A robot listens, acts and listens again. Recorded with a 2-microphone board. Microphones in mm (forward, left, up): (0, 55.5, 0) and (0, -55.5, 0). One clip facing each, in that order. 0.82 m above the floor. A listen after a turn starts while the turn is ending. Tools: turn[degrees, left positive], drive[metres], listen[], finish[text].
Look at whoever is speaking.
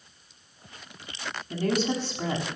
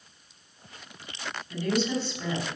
Thought: The woman speaking: about 40° left or 140° left.
Action: turn[40]
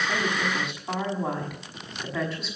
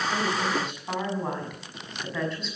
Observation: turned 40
Action: finish[Facing the woman speaking.]